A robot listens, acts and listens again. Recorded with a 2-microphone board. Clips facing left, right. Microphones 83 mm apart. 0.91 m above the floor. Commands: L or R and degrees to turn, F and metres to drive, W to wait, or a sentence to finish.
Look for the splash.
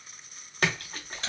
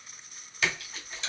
L50
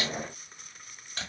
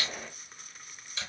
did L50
W
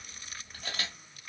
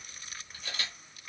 I heard a splash, but can't make it out now. It was about straight ahead or 80° left.